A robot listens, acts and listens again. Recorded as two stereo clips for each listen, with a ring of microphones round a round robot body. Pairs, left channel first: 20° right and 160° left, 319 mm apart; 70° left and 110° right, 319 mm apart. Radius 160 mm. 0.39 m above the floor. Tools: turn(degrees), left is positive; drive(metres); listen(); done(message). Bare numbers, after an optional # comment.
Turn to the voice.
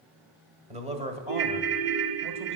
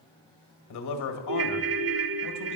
# The man speaking: 90° left.
turn(90)
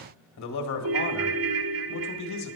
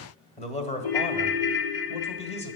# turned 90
done("Facing the man speaking, 1 to 2 m away.")